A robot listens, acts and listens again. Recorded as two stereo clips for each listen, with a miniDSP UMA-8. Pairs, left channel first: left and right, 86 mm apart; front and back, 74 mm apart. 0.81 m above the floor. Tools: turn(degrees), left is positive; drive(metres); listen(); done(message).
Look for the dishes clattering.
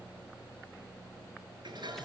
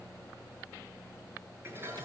turn(degrees=-120)
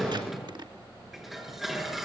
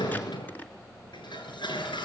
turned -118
done("Found it: dishes clattering, straight ahead.")